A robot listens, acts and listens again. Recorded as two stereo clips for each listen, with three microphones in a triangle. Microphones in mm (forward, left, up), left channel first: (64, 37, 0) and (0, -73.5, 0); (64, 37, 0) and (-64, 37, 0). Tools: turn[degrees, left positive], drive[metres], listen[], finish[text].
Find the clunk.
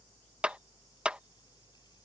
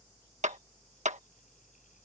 Action: listen[]
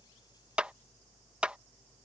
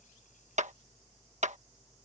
Action: listen[]
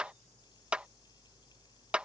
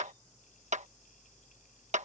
Action: finish[I can't make out a clunk, only a clap.]